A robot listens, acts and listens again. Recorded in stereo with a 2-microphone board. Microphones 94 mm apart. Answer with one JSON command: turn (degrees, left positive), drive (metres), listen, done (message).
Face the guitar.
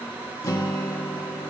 {"turn": 35}
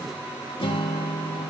{"turn": 105}
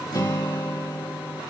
{"turn": 50}
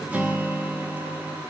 {"turn": -15}
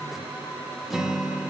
{"done": "Found it: a guitar, straight ahead, 1 to 2 m away."}